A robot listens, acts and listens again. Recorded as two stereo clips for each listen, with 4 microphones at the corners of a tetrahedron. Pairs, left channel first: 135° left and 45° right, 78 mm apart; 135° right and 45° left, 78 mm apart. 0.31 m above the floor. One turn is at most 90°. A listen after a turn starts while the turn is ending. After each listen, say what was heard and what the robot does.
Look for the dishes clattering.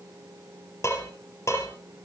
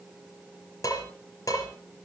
The dishes clattering: 175° right. Turn 90° right.
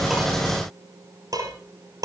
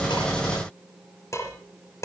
The dishes clattering is now 85° right. Turn 85° right.
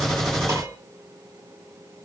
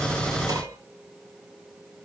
Keep listening.
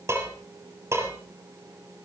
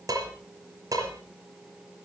Found it: dishes clattering, straight ahead, over 4 m away.